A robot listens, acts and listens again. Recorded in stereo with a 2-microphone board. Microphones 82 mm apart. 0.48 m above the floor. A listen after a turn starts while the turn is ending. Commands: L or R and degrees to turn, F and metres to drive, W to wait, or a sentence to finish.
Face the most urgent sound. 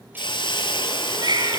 R60
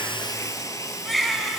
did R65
Facing the baby crying, 2 to 4 m away.